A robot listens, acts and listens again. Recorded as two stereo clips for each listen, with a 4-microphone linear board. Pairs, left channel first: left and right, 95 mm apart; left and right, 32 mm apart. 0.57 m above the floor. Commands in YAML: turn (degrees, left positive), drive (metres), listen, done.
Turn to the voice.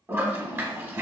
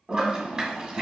listen: true
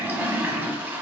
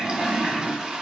listen: true
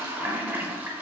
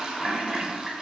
done: "I can't make out anyone speaking to turn to."